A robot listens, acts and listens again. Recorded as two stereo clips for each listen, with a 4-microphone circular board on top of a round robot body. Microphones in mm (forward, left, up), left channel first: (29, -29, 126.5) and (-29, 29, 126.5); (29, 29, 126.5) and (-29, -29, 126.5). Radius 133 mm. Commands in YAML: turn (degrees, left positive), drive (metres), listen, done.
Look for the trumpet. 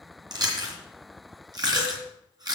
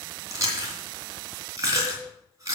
listen: true
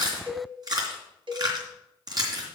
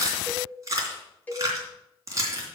listen: true
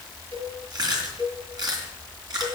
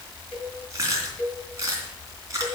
done: "I can't make out a trumpet, only chewing and a cowbell."